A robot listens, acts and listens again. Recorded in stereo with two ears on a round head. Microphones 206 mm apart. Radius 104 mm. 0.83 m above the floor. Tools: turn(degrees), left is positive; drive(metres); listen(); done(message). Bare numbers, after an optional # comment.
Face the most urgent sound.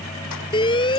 # The alarm: about 20° left or 160° left.
turn(20)
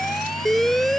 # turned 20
done("Found it: an alarm, straight ahead.")